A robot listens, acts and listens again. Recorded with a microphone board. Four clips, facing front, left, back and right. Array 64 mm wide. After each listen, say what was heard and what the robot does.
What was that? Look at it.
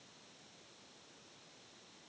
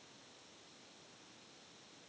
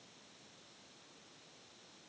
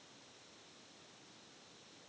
Keep listening.
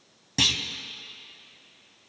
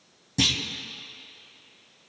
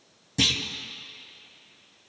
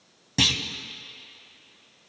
The clunk: 50° right. Turn 50° right.
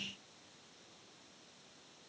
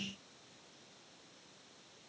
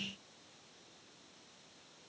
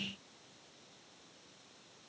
Facing where the clunk came from. I can't hear it now.